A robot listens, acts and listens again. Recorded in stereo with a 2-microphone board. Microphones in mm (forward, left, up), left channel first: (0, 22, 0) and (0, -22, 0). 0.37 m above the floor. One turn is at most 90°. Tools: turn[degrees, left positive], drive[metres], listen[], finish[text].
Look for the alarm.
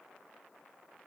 Action: listen[]
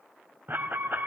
Thought: The alarm: about 50° right or 130° right.
Action: turn[-50]
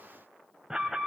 Thought: So it is at 15° right.
Action: turn[-15]
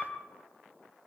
Action: finish[Found it: an alarm, straight ahead.]